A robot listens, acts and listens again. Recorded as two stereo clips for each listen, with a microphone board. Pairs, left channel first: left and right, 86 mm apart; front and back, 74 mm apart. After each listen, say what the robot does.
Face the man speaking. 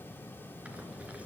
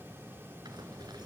Keep listening.
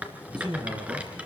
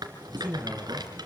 Turn 120° right.
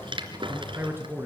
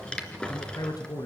Turn 30° right.
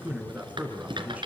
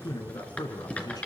Turn 20° right.
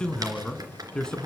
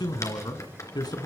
Turn 10° left.
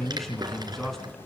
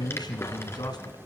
Facing the man speaking.